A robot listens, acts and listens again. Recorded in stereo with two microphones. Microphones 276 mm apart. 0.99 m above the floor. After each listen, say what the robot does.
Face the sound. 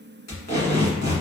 Turn 65° left.
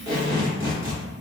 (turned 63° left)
Turn 50° left.
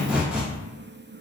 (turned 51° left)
Found it: tape being pulled, straight ahead, 1 to 2 m away.